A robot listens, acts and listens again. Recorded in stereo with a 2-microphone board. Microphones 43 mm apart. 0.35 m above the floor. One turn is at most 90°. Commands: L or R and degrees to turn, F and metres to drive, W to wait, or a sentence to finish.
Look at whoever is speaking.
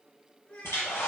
L55
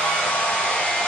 W
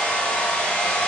W
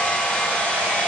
I heard a child speaking, but can't make it out now. It was about straight ahead or 70° left.